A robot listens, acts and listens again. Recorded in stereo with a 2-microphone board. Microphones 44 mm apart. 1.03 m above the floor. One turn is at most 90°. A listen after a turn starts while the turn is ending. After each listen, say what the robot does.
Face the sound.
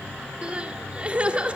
Turn 25° right.
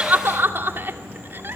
Turn 90° right.
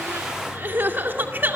Turn 50° right.
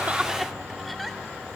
Keep listening.
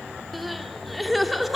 Found it: crying, straight ahead.